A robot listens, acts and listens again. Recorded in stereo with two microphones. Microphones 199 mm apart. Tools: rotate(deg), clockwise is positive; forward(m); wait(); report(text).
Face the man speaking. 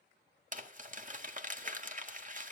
wait()
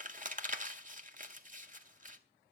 wait()
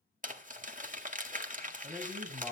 rotate(30)
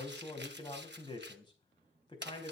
rotate(-25)
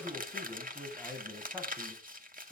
report("Facing the man speaking, over 4 m away.")